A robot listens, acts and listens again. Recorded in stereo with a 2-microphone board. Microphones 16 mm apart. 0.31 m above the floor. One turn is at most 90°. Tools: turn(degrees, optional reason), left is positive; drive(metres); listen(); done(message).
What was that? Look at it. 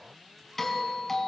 turn(degrees=15, reason="The doorbell: about 15° left or 165° left.")
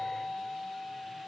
done("Facing the doorbell.")